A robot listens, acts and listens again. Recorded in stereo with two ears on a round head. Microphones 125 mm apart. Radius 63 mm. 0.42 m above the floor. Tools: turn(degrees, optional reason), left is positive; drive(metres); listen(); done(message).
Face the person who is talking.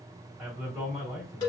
turn(degrees=-30)
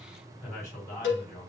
turn(degrees=30, reason="So it is at 30° left.")
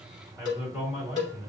done("Found it: a man speaking, straight ahead, 2 to 4 m away.")